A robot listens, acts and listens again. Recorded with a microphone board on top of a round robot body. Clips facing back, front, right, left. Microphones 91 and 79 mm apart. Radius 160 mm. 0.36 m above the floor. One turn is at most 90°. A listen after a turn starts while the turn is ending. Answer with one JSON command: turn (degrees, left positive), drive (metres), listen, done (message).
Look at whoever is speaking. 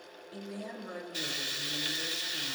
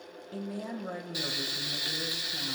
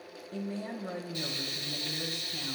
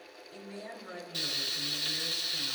{"turn": -40}
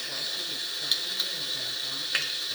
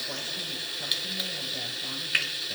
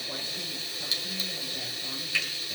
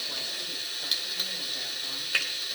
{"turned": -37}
{"listen": true}
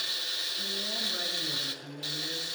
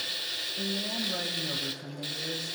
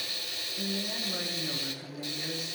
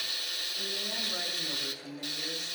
{"done": "Found it: a woman speaking, straight ahead."}